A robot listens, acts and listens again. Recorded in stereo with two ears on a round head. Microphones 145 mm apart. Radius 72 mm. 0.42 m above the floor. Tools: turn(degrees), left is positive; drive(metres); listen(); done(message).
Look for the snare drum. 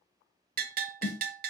turn(degrees=55)
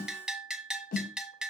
turn(degrees=65)
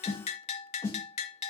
turn(degrees=20)
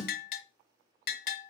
done("Found it: a snare drum, straight ahead.")